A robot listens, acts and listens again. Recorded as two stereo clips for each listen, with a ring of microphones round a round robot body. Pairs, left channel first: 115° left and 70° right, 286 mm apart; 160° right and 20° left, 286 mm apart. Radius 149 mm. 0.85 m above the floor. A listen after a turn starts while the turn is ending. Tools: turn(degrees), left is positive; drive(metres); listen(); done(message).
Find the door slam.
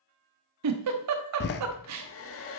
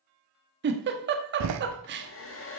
turn(degrees=55)
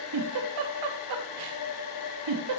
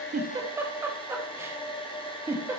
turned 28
turn(degrees=30)
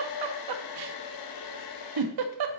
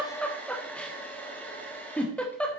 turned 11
turn(degrees=20)
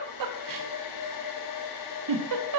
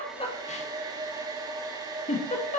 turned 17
done("Facing where the door slam came from. I can't hear it now.")